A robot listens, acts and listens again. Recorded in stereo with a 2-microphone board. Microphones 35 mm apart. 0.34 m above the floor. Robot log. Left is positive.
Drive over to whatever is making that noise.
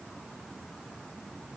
cmd idle
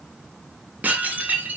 note: The dishes clattering: about 45° right or 135° right.
cmd yaw -45
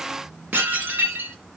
note: So it is at 90° right.
cmd yaw -90
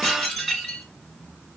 note: The dishes clattering is now 10° left.
cmd yaw +10
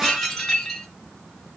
cmd fwd 1.0
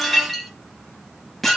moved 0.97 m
cmd fwd 1.0
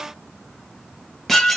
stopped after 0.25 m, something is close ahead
end: I am next to the dishes clattering.